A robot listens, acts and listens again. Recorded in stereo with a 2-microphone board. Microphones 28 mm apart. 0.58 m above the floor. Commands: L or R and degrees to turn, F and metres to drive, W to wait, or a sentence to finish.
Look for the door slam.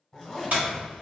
R60
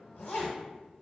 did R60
W
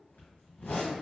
I heard a door slam, but can't make it out now. It was about straight ahead or 60° right.